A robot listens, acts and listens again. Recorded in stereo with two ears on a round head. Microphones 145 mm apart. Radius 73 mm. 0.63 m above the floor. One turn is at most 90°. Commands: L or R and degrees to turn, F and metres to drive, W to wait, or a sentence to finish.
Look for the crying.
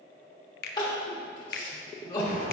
L25
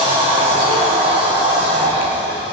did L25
W
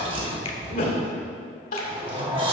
L90
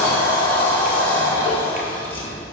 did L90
L35
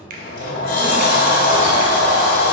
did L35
W
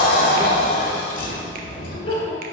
L30
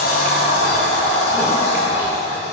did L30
W
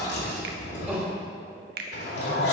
R10
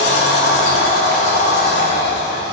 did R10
W
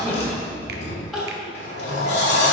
Facing the crying.